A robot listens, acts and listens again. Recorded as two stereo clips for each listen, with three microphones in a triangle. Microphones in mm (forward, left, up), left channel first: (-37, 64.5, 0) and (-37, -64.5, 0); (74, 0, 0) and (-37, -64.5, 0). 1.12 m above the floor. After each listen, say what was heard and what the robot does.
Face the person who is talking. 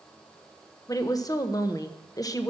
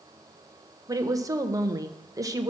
The woman speaking: 150° left. Turn 150° left.
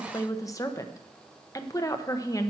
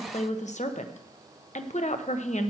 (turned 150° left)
The woman speaking is now 30° left. Turn 30° left.
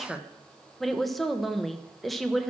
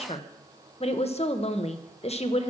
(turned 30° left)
Found it: a woman speaking, straight ahead, under 1 m away.